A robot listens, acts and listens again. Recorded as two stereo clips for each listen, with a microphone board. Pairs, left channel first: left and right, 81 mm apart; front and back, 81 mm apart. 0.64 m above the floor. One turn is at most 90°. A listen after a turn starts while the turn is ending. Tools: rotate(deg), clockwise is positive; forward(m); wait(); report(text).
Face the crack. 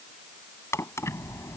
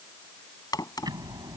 rotate(-35)
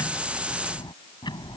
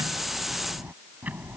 report("Facing where the crack came from. I can't hear it now.")